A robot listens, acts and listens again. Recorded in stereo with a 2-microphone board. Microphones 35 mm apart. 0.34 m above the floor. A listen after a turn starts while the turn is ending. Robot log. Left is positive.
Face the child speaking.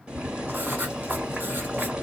cmd idle
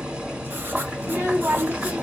note: The child speaking: about 65° right or 115° right.
cmd yaw -65
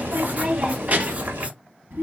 note: So it is at 60° right.
cmd yaw -60
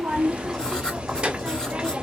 note: The child speaking is now 20° right.
cmd yaw -20
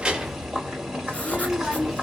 end: Found it: a child speaking, straight ahead, 1 to 2 m away.